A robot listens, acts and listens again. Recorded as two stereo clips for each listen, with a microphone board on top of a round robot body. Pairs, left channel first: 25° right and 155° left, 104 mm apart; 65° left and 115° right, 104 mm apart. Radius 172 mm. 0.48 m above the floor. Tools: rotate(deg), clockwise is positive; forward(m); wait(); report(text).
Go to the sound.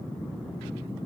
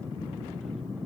wait()
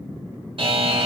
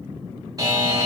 rotate(165)
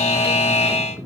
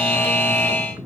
forward(1.0)
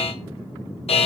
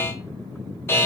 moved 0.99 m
forward(1.0)
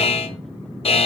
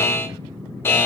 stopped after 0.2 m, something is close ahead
report("Arrived at the buzzer, straight ahead.")